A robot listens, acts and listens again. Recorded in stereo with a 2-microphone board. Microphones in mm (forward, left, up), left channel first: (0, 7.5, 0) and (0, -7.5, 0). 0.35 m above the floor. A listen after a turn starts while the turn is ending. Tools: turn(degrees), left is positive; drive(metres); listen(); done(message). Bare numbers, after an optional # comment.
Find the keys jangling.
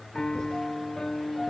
listen()
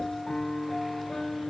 listen()
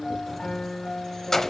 # The keys jangling: about 35° left or 145° left.
turn(35)
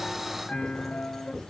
listen()
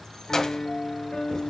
# The keys jangling: about 40° left or 140° left.
turn(40)
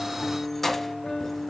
# So it is at 20° left.
turn(20)
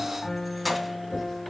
done("Facing the keys jangling.")